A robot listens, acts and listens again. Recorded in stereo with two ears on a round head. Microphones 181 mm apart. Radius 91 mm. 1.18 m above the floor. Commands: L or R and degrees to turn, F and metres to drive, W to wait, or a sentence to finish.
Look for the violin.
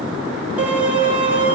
R30
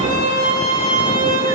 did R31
L25
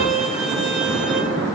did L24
Facing the violin, 2 to 4 m away.